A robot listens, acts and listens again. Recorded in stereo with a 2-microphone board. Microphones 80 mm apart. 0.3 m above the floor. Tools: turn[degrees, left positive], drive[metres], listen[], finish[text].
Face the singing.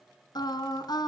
Thought: The singing: about 60° left or 120° left.
Action: turn[60]
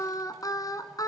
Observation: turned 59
Thought: So it is at 55° left.
Action: turn[55]
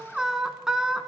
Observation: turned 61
Action: finish[Facing the singing, 1 to 2 m away.]